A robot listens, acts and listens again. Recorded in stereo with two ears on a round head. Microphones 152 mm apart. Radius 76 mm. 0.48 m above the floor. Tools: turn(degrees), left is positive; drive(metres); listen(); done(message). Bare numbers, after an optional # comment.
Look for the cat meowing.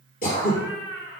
turn(90)
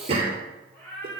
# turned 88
# So it is at 10° left.
turn(10)
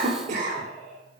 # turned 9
done("Facing the cat meowing.")